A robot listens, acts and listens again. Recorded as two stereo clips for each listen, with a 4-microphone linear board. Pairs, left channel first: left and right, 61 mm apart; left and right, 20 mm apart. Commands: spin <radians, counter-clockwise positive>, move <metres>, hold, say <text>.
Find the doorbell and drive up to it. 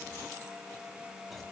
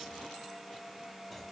hold
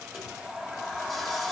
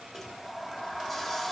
hold
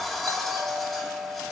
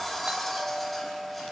spin -1.13
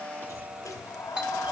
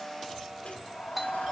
spin -0.35
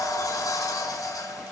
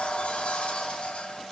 hold
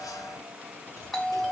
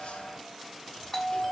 move 1.0
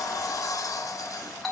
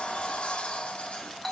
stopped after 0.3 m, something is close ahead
say Something is in my way. I am facing the doorbell but have not reached it.